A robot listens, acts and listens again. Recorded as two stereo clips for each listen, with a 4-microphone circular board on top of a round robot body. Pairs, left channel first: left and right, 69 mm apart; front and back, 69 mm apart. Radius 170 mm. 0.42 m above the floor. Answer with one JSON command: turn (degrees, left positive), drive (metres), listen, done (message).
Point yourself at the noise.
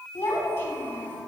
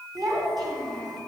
{"turn": 155}
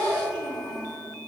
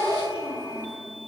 {"done": "Found it: a child speaking, straight ahead."}